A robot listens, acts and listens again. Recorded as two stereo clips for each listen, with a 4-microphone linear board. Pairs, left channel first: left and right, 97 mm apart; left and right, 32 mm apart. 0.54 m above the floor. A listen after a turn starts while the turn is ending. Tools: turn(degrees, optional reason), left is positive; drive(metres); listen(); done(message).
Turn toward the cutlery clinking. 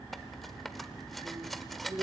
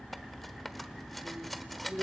turn(degrees=30)
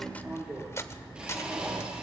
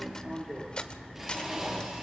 turn(degrees=150, reason="So it is at 150° left.")
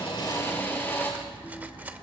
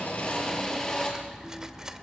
turn(degrees=-20, reason="The cutlery clinking is now 20° right.")
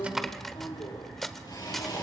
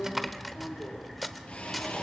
done("Found it: cutlery clinking, straight ahead.")